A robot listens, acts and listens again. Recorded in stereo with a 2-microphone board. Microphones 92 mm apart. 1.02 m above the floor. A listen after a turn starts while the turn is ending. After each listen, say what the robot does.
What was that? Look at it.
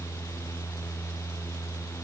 Keep listening.
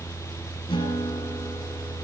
Turn 90° left.
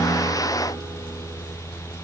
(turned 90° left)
Keep listening.
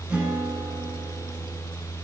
Turn 15° right.
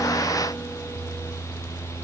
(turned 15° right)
Keep listening.
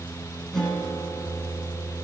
Facing the guitar, over 4 m away.